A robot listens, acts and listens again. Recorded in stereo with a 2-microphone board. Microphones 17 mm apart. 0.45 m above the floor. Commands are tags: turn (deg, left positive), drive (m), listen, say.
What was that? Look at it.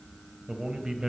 <turn deg="-60"/>
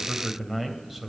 <turn deg="-15"/>
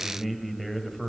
<say>Found it: a man speaking, straight ahead.</say>